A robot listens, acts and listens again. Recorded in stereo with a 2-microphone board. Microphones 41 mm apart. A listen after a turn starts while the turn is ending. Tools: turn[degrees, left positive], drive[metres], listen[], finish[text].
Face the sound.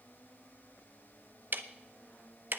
Thought: The ticking: about 55° right or 125° right.
Action: turn[-55]
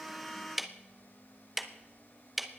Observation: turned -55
Action: finish[Found it: ticking, straight ahead.]